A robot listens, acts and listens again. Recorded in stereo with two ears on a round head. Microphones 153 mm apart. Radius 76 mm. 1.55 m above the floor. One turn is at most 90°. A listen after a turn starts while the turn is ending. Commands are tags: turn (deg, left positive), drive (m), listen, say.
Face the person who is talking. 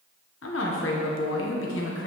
<turn deg="90"/>
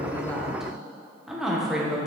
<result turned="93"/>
<say>Facing the woman speaking, 1 to 2 m away.</say>